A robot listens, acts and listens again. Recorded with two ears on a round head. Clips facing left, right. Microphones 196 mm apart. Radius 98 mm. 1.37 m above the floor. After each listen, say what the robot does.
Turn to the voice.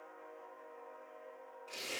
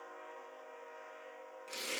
Keep listening.
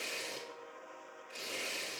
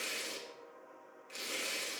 Keep listening.
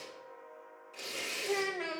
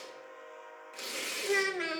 Turn 25° right.
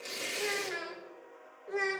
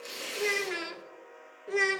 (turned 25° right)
Turn 130° right.
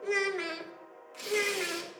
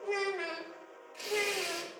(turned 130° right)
Turn 30° left.
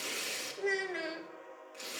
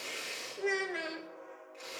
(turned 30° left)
Found it: a child speaking, straight ahead, under 1 m away.